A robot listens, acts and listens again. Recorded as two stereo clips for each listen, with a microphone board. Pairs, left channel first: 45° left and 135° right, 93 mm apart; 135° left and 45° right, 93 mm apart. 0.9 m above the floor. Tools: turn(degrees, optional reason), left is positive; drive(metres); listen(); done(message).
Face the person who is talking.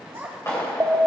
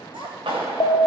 turn(degrees=-70, reason="The child speaking: 70° right.")
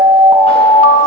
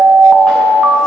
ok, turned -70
listen()
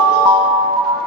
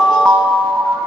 listen()
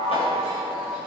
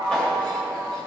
done("I heard a child speaking from this way, but can't make it out now.")